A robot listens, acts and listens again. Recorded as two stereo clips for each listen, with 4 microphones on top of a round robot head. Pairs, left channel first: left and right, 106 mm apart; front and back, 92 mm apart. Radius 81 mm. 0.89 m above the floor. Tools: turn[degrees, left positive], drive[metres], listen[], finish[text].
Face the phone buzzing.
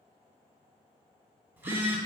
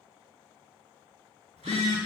Thought: The phone buzzing: 160° right.
Action: turn[-160]
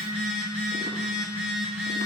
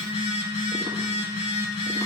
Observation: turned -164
Action: finish[Facing the phone buzzing.]